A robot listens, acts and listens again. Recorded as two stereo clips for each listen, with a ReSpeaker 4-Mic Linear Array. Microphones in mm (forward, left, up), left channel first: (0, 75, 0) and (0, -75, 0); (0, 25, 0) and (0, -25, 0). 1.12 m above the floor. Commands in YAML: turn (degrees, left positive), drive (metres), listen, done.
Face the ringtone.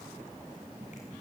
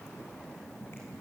listen: true
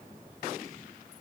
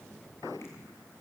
listen: true
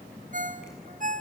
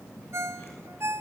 turn: -60
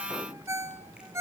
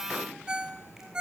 turn: -20
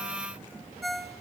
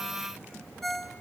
done: "Facing the ringtone."